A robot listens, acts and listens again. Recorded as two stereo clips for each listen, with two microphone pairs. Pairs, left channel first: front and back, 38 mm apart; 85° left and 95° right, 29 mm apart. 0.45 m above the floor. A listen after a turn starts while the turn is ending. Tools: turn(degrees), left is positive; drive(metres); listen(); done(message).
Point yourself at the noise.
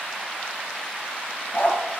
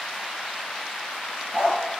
turn(degrees=-30)
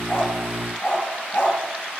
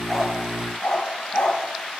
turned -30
turn(degrees=25)
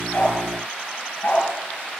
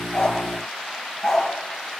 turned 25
turn(degrees=10)
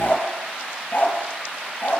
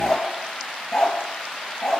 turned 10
turn(degrees=15)
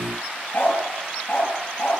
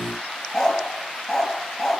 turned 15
done("Found it: a dog barking, straight ahead, 2 to 4 m away.")